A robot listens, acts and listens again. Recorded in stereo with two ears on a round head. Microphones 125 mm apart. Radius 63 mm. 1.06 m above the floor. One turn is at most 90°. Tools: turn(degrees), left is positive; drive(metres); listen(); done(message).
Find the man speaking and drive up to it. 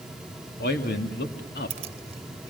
turn(degrees=90)
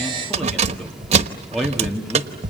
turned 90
drive(metres=1.0)
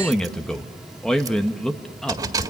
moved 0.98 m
drive(metres=1.0)
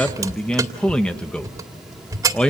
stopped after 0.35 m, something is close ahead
turn(degrees=10)
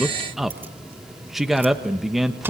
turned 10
done("I am next to the man speaking.")